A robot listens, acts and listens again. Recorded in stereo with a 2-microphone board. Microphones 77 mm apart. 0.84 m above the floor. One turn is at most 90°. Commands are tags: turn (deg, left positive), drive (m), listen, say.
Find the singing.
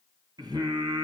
<turn deg="-75"/>
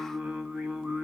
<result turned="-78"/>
<turn deg="-10"/>
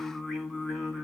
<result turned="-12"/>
<say>Facing the singing, 1 to 2 m away.</say>